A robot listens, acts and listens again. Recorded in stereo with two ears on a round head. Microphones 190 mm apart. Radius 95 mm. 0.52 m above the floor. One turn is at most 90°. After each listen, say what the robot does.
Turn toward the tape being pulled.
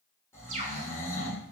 Keep listening.
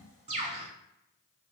Keep listening.
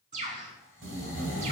Turn 65° right.
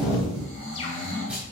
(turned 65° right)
Turn 10° right.
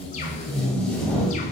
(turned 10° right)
Found it: tape being pulled, straight ahead, 1 to 2 m away.